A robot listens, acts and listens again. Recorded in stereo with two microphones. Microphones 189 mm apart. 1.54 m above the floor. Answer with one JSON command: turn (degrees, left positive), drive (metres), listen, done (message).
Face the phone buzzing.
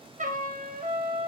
{"listen": true}
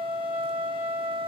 {"listen": true}
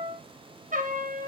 {"done": "I can't make out a phone buzzing, only a trumpet."}